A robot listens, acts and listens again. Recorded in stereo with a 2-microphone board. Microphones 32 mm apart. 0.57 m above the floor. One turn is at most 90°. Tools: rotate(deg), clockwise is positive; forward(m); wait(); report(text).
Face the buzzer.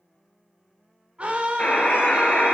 rotate(-55)
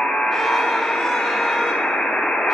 rotate(-70)
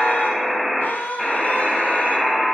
report("Facing the buzzer, 1 to 2 m away.")